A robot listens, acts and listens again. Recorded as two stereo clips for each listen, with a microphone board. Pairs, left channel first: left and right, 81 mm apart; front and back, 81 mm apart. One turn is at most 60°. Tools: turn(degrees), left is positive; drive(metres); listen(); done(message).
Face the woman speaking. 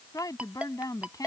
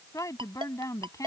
turn(degrees=45)
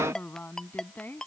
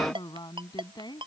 turn(degrees=25)
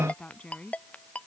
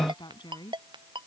turn(degrees=15)
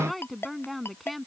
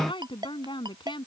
done("Facing the woman speaking.")